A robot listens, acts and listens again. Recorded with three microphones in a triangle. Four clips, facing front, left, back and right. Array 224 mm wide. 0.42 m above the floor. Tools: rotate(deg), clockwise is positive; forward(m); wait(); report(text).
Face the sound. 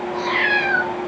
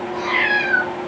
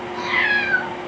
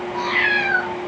report("Facing the cat meowing, 2 to 4 m away.")